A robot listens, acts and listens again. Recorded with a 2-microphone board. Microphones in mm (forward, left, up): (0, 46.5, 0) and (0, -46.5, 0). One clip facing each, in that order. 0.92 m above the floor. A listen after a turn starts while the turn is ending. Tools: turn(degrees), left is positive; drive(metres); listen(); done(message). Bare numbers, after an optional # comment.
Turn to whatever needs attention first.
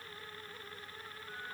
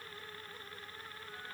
listen()
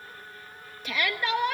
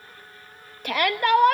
# The shout: about 55° right or 125° right.
turn(-55)
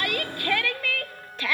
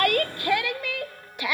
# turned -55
# So it is at 20° right.
turn(-20)
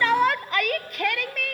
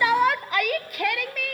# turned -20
done("Facing the shout.")